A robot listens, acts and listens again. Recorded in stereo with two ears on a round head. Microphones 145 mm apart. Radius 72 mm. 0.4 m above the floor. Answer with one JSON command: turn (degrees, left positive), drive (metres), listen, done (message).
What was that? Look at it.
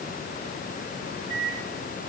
{"turn": -25}
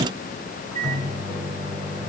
{"done": "Facing the microwave."}